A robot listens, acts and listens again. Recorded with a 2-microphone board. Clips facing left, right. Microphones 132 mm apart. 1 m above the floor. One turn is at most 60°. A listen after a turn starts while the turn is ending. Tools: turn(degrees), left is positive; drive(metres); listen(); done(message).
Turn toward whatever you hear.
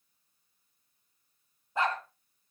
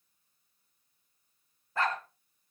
turn(degrees=20)
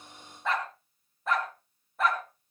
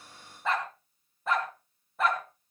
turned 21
done("Found it: a dog barking, straight ahead.")